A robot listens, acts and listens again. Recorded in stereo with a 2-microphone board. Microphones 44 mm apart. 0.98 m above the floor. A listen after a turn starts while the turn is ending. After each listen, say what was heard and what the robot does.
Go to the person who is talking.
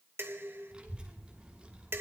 The child speaking: about 20° right or 160° right. Turn 20° right.
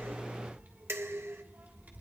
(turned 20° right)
So it is at 140° right. Turn 140° right.
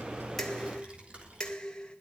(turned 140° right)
The child speaking is now 30° right. Turn 30° right.
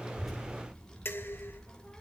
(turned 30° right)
The child speaking is now 10° left. Turn 10° left.
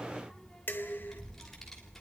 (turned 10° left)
Drive 1.0 m forward.
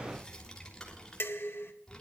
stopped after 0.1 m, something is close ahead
The child speaking is now 15° left. Turn 15° left.
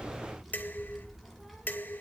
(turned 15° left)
Blocked. The child speaking is further on, straight ahead.